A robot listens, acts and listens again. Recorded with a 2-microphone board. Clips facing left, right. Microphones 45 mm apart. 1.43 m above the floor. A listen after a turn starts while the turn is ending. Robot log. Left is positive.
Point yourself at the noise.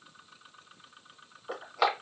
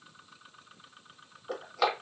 note: The crushing: about 20° left or 160° left.
cmd yaw +20
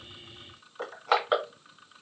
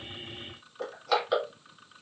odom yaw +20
note: So it is at 140° left.
cmd yaw +140
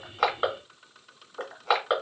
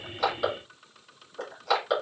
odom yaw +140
note: The crushing is now 30° left.
cmd yaw +30
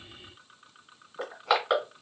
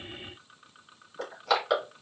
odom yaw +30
note: The crushing is now 20° left.
cmd yaw +20
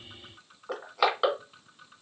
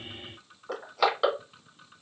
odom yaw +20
end: Facing the crushing.